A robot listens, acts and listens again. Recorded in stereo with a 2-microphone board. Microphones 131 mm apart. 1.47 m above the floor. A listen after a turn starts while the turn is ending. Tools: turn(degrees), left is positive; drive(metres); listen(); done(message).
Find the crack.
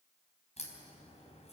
turn(degrees=55)
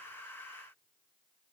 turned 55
listen()
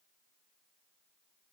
done("I heard a crack, but can't make it out now. It was about straight ahead or 70° left.")